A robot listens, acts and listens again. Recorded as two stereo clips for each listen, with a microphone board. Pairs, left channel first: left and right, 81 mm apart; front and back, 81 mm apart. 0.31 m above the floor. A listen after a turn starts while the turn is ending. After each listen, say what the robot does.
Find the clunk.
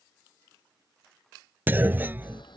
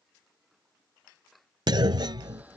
Turn 155° right.
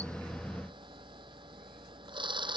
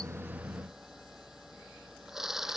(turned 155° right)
Facing where the clunk came from. I can't hear it now.